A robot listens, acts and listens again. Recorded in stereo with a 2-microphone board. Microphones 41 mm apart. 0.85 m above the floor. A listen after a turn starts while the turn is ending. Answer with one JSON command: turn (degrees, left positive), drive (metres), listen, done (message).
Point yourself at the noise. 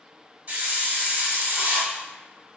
{"turn": -40}
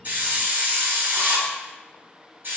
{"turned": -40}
{"turn": -95}
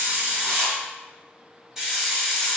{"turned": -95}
{"turn": -15}
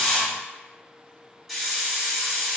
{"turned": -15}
{"done": "Found it: a hiss, straight ahead."}